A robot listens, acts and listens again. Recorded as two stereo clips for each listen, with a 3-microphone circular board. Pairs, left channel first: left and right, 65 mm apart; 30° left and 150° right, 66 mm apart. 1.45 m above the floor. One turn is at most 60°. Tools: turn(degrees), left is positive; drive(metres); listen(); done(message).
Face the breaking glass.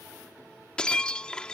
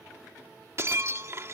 turn(degrees=60)
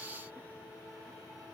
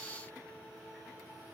turn(degrees=60)
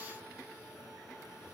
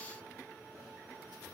turn(degrees=45)
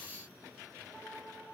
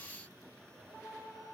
done("Facing where the breaking glass came from. I can't hear it now.")